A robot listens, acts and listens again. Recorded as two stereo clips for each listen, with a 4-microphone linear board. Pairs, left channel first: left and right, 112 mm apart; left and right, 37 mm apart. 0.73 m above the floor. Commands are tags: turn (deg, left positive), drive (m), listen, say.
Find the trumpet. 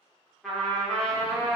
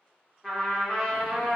<turn deg="30"/>
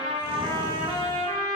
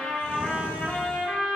<turn deg="150"/>
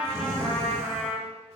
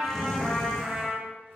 <say>Facing the trumpet.</say>